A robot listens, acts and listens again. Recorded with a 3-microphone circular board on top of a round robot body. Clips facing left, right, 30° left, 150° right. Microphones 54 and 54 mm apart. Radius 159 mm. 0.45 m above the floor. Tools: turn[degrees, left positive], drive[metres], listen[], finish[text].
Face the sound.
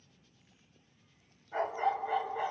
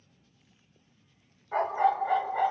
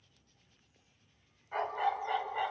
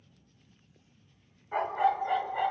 Thought: The dog barking: 60° right.
Action: turn[-60]
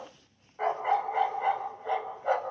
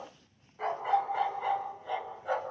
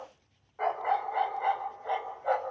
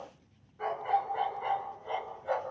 Thought: The dog barking is now 55° left.
Action: turn[55]
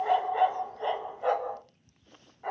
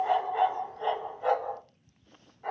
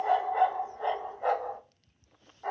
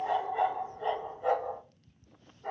Thought: The dog barking is now 10° left.
Action: turn[10]
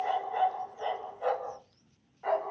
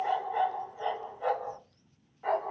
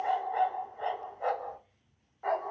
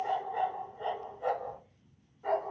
Action: finish[Found it: a dog barking, straight ahead, 1 to 2 m away.]